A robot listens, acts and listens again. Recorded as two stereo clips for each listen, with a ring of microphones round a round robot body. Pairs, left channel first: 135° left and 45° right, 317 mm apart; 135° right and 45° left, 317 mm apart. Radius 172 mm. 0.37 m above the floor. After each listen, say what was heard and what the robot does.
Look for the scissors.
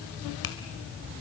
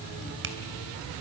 Keep listening.
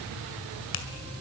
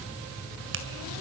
Keep listening.
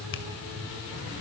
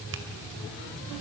I can't make out scissors, only a finger snap.